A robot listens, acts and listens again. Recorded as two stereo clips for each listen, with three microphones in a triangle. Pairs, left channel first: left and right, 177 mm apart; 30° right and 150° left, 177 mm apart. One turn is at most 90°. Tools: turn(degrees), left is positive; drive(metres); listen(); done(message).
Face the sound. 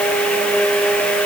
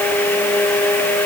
listen()
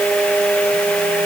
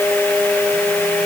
listen()
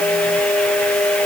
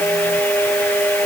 done("I can't make out anything.")